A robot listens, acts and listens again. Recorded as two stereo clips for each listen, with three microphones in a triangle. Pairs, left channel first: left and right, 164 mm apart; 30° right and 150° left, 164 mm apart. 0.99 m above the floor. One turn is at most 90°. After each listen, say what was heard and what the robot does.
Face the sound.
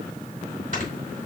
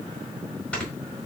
The snoring: 110° right. Turn 90° right.
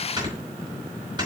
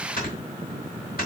The snoring is now 30° right. Turn 30° right.
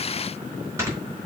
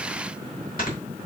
The snoring is now 20° right. Turn 20° right.
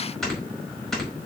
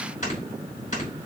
Facing the snoring.